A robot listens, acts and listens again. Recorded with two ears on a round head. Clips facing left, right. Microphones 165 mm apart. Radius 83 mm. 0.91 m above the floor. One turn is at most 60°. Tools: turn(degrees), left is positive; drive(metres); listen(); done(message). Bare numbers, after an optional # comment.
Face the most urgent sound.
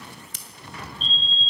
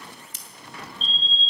# The fire alarm: about 50° left or 130° left.
turn(50)
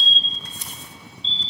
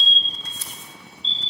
# So it is at 75° left.
turn(60)
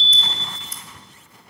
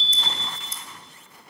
# The fire alarm is now 30° left.
turn(30)
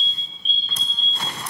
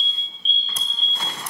done("Facing the fire alarm.")